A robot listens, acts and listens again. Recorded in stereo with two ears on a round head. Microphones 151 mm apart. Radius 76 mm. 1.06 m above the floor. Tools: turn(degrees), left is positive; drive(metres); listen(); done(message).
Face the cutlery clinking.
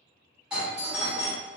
listen()
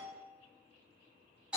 listen()
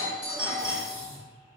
turn(degrees=45)
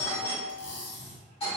turn(degrees=90)
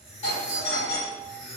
done("Found it: cutlery clinking, straight ahead.")